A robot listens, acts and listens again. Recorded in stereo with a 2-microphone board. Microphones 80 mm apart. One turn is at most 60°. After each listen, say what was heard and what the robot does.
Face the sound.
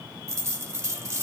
The dropped coin: about 30° right or 150° right. Turn 30° right.
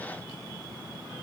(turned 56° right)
Keep listening.
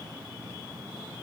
I heard a dropped coin, but can't make it out now. It was about 25° left or 90° right.